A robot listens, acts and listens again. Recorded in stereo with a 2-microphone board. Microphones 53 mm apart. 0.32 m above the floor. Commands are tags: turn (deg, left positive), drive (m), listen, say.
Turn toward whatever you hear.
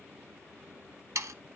<turn deg="-70"/>
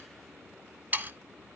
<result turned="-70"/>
<turn deg="-35"/>
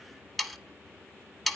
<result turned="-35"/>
<say>Facing the sawing, under 1 m away.</say>